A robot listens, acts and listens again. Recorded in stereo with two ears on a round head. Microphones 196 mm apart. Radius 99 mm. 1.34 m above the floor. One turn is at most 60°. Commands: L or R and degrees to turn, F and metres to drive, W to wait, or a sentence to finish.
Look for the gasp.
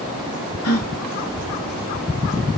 L60
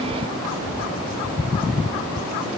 L30
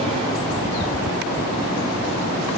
I heard a gasp from this way, but can't make it out now.